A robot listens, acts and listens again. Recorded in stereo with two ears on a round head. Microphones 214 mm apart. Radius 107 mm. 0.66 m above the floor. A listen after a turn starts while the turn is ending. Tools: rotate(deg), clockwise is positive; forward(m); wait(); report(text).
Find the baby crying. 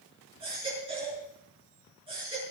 rotate(20)
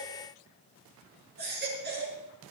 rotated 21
rotate(140)
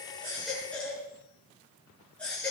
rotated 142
report("Facing the baby crying.")